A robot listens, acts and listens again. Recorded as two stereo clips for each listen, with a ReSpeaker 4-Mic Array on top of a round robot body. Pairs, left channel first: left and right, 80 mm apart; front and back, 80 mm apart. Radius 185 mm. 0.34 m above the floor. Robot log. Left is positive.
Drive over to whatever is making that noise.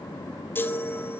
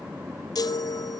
note: The chime: 30° left.
cmd yaw +30
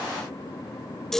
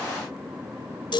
cmd fwd 1.0
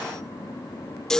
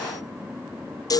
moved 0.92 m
note: The chime is now 10° left.
cmd yaw +10
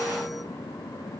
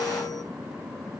cmd idle
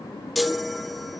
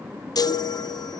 cmd fwd 1.0
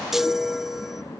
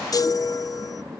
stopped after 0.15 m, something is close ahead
end: I am next to the chime.